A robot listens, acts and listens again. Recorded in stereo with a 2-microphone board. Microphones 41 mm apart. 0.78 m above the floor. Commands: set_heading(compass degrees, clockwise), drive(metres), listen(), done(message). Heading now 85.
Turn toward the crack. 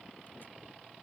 listen()
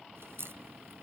set_heading(175)
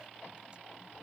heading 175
done("I heard a crack from this way, but can't make it out now.")